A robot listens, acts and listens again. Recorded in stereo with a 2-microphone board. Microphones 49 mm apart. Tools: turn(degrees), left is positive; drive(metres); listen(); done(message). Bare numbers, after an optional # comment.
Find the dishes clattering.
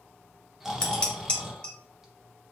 # The dishes clattering: about 25° left or 155° left.
turn(25)
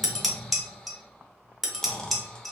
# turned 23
done("Facing the dishes clattering, 1 to 2 m away.")